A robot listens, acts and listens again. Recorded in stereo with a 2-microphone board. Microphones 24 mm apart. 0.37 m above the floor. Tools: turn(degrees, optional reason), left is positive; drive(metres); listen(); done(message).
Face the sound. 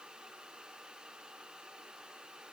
listen()
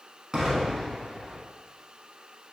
turn(degrees=-30, reason="The explosion: about 30° right or 150° right.")
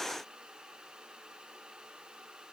listen()
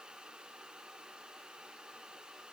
done("I heard an explosion, but can't make it out now. It was about straight ahead or 120° right.")